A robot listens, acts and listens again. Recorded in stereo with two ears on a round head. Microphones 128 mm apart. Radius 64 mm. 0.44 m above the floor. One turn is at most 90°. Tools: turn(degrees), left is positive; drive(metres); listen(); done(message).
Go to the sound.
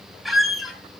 turn(degrees=30)
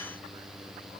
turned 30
listen()
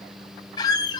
turn(degrees=90)
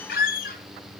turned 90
turn(degrees=90)
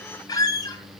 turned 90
turn(degrees=30)
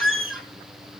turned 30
drive(metres=1.0)
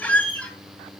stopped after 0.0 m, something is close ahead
turn(degrees=10)
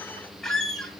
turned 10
done("Blocked. The squeak is further on, straight ahead.")